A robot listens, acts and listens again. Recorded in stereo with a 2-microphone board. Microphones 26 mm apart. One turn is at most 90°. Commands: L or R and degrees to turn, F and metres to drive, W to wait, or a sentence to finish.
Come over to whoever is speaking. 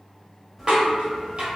W
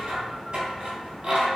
W
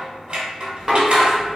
I can't make out anyone speaking to turn to.